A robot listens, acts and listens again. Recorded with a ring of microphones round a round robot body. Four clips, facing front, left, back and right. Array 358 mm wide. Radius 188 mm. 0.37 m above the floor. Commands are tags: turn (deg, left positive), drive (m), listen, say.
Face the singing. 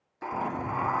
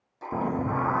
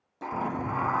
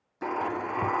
<turn deg="100"/>
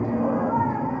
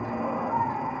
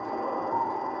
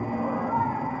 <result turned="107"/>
<turn deg="-10"/>
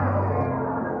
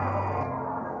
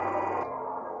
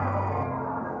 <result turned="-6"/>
<say>Found it: singing, straight ahead.</say>